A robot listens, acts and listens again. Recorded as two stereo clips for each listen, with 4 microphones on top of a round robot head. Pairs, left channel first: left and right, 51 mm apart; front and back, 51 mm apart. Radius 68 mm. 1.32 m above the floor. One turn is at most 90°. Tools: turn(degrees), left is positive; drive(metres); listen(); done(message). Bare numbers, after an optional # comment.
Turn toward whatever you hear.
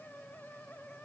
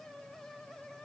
listen()
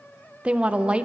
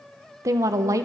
# The woman speaking: 155° right.
turn(-90)
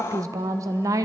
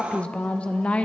# The woman speaking is now 70° right.
turn(-70)
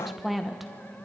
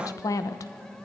done("Facing the woman speaking.")